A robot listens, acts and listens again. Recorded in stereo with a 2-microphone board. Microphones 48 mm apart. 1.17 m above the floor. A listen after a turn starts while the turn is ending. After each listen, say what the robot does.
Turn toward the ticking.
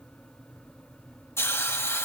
Keep listening.
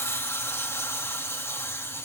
Keep listening.
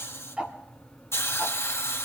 Turn 20° right.
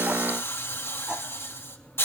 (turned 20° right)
Keep listening.
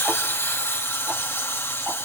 Keep listening.
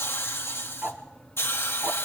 Turn 140° right.
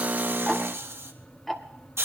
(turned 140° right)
Found it: ticking, straight ahead.